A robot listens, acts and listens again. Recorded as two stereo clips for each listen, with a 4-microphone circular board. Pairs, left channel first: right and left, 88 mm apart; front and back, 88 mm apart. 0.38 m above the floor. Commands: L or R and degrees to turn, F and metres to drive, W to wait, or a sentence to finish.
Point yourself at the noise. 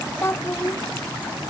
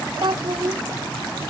R150
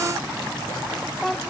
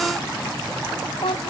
Found it: a child speaking, straight ahead.